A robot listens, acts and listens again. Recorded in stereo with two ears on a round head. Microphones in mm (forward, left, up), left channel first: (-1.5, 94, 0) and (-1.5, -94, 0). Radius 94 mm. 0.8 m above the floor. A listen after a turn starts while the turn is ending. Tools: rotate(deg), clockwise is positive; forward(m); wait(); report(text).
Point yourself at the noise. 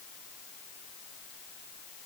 wait()
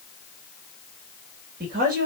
rotate(45)
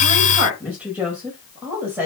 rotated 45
rotate(10)
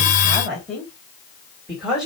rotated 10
report("Found it: a woman speaking, straight ahead, over 4 m away.")